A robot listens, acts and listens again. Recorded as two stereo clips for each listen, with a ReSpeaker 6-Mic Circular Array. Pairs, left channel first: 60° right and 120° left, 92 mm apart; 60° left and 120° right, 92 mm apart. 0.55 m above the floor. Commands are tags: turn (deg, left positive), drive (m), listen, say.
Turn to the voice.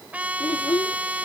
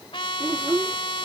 <turn deg="-65"/>
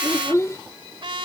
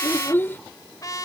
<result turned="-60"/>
<say>Facing the child speaking.</say>